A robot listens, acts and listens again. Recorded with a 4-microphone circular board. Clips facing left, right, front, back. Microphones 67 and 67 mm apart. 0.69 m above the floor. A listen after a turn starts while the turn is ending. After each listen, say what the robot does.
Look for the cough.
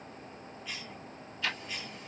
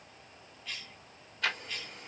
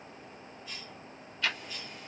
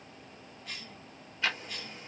Turn 170° left.
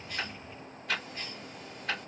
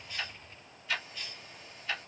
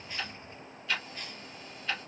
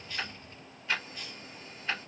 Turn 40° left.
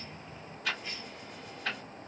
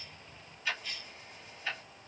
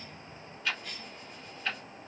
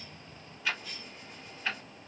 Turn 25° left.
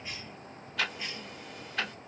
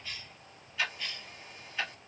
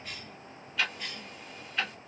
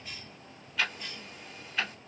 Turn 20° left.
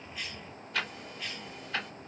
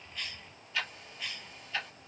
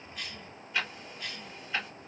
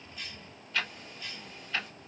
Facing the cough.